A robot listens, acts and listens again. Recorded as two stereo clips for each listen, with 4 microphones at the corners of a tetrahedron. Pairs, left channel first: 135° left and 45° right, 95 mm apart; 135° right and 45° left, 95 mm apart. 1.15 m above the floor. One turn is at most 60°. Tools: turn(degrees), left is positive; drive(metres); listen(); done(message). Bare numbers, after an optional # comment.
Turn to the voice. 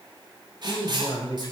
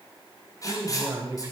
# The man speaking: 95° left.
turn(60)
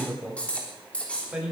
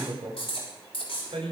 # The man speaking is now 30° left.
turn(30)
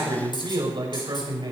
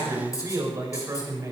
# The man speaking is now 10° right.
turn(-10)
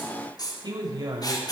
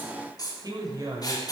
done("Facing the man speaking, over 4 m away.")